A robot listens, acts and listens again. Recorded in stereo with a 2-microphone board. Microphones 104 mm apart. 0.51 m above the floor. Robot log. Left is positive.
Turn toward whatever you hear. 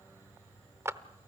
note: The clap: about 25° right or 155° right.
cmd yaw -25
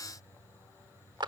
note: So it is at 125° right.
cmd yaw -125
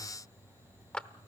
note: The clap is now 10° left.
cmd yaw +10
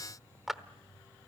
end: Facing the clap.